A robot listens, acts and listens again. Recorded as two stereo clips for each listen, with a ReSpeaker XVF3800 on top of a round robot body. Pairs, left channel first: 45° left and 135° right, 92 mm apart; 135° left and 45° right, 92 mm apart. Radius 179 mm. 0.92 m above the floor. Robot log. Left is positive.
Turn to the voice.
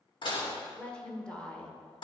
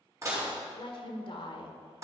note: The woman speaking: 125° left.
cmd yaw +125
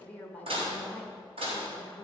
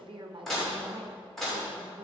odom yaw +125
note: The woman speaking is now 25° right.
cmd yaw -25
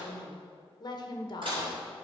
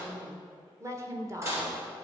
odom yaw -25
note: The woman speaking is now 10° left.
cmd yaw +10
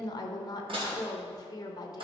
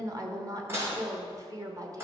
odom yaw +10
end: Facing the woman speaking, 1 to 2 m away.